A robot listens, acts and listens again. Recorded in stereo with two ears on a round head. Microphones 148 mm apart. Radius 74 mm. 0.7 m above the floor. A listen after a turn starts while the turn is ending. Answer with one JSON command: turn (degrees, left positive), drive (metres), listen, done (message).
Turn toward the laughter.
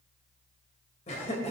{"turn": 45}
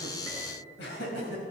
{"turn": 100}
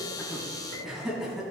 {"done": "Facing the laughter, over 4 m away."}